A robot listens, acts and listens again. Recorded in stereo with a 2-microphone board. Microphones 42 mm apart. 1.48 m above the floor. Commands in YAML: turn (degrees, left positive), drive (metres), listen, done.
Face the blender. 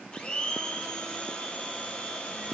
turn: 25
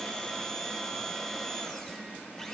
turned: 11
turn: 15
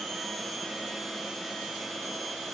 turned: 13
done: "Found it: a blender, straight ahead."